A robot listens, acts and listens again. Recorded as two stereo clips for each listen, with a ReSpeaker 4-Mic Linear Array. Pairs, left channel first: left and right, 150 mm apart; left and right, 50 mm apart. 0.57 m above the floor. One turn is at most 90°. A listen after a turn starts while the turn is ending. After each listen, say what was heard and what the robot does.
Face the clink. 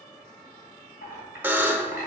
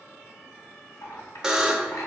The clink: about 75° left or 105° left. Turn 75° left.
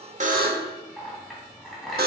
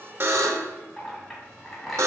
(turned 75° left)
Found it: a clink, straight ahead, 2 to 4 m away.